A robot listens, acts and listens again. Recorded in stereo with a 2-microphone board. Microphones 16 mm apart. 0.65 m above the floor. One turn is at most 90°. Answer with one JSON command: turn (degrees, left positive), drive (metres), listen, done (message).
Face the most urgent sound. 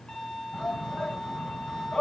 {"turn": 65}
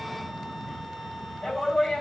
{"turn": 45}
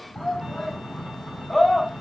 {"turn": 10}
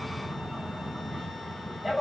{"done": "Facing the shout."}